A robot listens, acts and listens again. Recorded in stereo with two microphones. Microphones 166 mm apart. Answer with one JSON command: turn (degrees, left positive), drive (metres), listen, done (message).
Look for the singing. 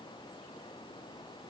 {"listen": true}
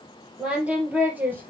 {"turn": -30}
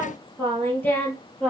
{"done": "Facing the singing, 2 to 4 m away."}